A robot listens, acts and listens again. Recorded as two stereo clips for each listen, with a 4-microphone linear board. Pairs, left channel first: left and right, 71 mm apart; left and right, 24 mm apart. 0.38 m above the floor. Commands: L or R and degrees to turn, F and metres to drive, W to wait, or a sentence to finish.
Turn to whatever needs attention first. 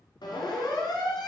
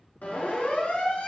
L90
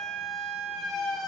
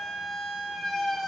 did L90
Facing the siren, over 4 m away.